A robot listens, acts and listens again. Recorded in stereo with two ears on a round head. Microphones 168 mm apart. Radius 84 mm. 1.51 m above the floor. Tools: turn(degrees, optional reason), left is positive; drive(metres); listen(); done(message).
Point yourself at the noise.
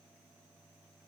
listen()
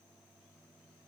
listen()
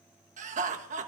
turn(degrees=-40, reason="The laughter: about 40° right or 140° right.")
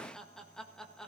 done("Found it: laughter, straight ahead.")